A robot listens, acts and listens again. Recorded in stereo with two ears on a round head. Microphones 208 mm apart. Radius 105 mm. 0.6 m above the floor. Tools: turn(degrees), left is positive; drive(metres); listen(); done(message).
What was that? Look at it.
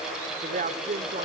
turn(degrees=-35)
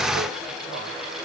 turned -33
listen()
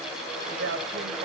turn(degrees=-125)
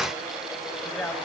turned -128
done("Found it: a man speaking, straight ahead, over 4 m away.")